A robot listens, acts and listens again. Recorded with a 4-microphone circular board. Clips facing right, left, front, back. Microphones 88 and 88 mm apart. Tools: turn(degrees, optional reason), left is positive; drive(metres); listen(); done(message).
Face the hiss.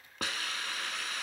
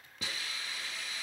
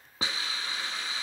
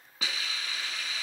turn(degrees=-55, reason="The hiss: 55° right.")
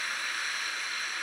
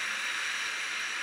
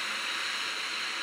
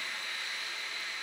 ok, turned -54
done("Facing the hiss, 1 to 2 m away.")